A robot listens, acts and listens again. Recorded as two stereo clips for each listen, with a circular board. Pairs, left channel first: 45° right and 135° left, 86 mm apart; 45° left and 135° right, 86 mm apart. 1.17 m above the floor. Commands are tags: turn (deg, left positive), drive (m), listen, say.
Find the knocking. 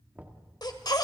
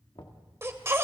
<turn deg="65"/>
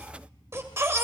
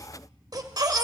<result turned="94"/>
<turn deg="-30"/>
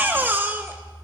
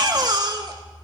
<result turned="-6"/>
<turn deg="-25"/>
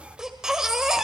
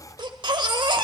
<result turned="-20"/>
<say>Facing where the knocking came from. I can't hear it now.</say>